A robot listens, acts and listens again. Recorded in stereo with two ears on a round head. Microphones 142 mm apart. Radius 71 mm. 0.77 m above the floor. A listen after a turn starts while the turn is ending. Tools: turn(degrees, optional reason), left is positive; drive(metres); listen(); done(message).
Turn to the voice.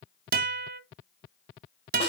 listen()
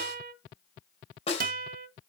listen()
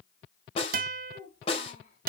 turn(degrees=45, reason="The child speaking: about 45° left or 135° left.")
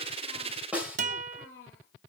turn(degrees=90, reason="So it is at 90° left.")
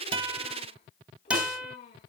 turn(degrees=35, reason="The child speaking is now 35° left.")
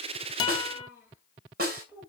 turn(degrees=-15, reason="The child speaking is now 15° right.")
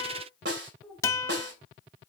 done("Facing the child speaking, over 4 m away.")